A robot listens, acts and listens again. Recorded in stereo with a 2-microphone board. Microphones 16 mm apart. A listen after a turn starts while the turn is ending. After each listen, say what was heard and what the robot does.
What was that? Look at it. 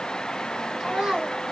The child speaking: about 60° right or 120° right. Turn 60° right.
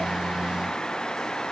Keep listening.
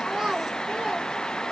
So it is at 50° right. Turn 50° right.
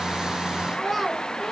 Facing the child speaking.